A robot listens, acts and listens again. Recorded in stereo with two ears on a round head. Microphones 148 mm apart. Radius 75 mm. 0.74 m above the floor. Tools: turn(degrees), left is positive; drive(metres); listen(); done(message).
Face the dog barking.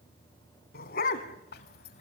turn(degrees=50)
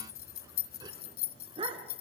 turn(degrees=-30)
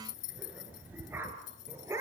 turn(degrees=-15)
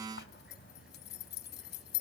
listen()
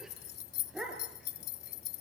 done("Found it: a dog barking, straight ahead.")